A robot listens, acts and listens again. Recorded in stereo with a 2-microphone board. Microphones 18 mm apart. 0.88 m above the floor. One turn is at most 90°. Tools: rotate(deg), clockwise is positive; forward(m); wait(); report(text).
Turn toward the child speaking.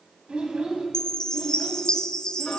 rotate(60)
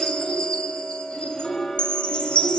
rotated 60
rotate(-20)
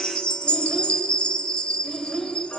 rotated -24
rotate(-15)
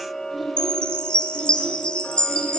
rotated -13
wait()
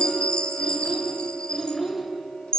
report("Found it: a child speaking, straight ahead, 1 to 2 m away.")